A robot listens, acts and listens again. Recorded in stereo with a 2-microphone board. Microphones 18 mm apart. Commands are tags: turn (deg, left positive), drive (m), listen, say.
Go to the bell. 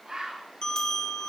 <turn deg="50"/>
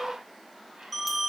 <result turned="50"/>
<drive m="1.0"/>
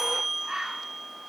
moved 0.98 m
<drive m="1.0"/>
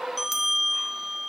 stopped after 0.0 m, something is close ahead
<turn deg="-10"/>
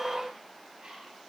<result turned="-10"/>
<listen/>
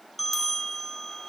<say>I am next to the bell.</say>